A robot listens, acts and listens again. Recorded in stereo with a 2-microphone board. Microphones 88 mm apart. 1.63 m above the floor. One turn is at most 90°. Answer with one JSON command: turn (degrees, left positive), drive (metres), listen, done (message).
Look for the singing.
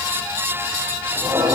{"turn": -70}
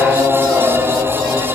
{"turn": -45}
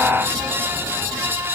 {"listen": true}
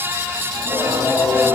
{"turn": -25}
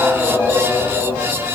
{"done": "Facing the singing."}